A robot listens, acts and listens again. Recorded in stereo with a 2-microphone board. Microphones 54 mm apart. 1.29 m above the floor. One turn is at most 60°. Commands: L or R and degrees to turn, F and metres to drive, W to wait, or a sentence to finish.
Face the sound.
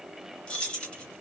L15
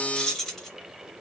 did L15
Found it: keys jangling, straight ahead, 1 to 2 m away.